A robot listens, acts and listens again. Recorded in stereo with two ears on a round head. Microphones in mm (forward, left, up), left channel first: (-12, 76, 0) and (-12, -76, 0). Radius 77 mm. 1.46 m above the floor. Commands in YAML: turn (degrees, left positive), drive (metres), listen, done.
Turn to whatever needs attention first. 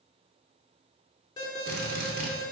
turn: 25
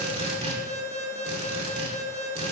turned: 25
turn: 130
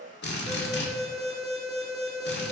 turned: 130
done: "Found it: an alarm, straight ahead."